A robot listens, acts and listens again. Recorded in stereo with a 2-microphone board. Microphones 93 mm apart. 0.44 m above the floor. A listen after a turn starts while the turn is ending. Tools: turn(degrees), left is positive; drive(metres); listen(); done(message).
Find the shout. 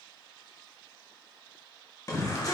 turn(degrees=40)
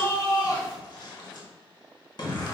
turn(degrees=85)
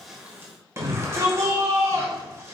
turn(degrees=-40)
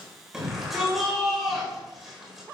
done("Facing the shout.")